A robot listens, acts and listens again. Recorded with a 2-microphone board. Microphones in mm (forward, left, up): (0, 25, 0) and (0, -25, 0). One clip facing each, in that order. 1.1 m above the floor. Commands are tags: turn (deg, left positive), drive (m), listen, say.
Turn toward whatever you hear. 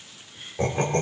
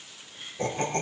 <turn deg="90"/>
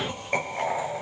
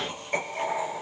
<turn deg="20"/>
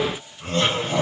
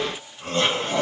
<say>Facing the laughter.</say>